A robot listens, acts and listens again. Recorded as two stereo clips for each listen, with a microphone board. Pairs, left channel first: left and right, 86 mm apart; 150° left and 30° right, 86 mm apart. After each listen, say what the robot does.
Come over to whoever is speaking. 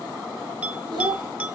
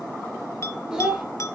Turn 110° right.
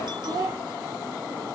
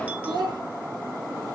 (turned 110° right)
Turn 50° right.
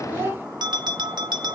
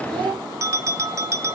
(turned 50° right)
Turn 25° right.
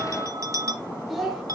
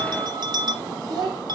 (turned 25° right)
Drive 1.0 m forward.
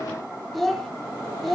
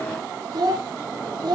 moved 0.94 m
Drive 1.0 m forward.
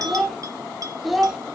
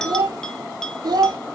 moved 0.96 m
Drive 1.0 m forward.
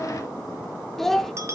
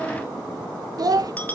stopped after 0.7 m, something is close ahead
I am next to the child speaking.